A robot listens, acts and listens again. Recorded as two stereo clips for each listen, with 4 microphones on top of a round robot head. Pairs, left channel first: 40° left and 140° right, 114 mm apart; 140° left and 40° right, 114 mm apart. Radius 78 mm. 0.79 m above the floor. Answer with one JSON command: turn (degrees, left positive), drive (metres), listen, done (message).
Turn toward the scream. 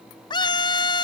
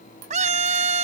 {"turn": -15}
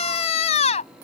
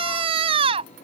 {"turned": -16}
{"done": "Found it: a scream, straight ahead."}